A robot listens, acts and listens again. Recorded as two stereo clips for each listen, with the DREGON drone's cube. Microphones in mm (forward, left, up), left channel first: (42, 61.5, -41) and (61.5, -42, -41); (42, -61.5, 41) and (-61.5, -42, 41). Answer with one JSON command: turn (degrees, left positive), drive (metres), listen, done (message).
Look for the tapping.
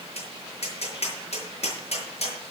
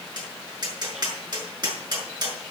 {"turn": 120}
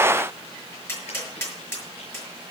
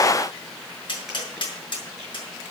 {"turn": 35}
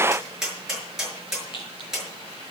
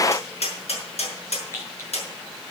{"done": "Found it: tapping, straight ahead, over 4 m away."}